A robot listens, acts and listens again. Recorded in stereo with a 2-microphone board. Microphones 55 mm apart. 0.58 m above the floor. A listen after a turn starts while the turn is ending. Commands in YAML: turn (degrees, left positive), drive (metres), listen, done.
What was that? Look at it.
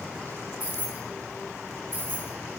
turn: -35
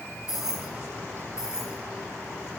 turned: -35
turn: -10
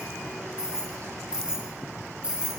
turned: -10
turn: -15
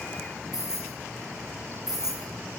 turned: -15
done: "Facing the keys jangling."